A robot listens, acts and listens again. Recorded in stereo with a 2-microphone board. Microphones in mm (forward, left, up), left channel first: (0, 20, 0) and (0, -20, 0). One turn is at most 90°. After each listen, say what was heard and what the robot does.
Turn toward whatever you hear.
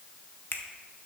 The finger snap: about 55° left or 125° left. Turn 55° left.
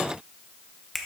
Found it: a finger snap, straight ahead.